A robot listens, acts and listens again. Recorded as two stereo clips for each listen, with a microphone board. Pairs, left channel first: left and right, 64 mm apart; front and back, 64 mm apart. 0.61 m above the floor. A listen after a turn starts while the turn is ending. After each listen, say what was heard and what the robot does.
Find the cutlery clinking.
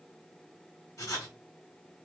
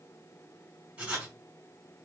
Keep listening.
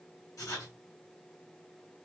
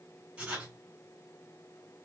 Keep listening.
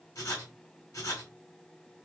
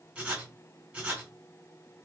I can't make out cutlery clinking to turn to.